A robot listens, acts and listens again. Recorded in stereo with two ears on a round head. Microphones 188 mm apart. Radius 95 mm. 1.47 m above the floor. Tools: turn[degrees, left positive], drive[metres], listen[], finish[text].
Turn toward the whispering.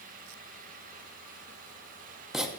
Action: listen[]
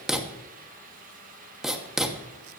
Action: listen[]
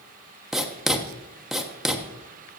Action: finish[I can't make out whispering, only writing.]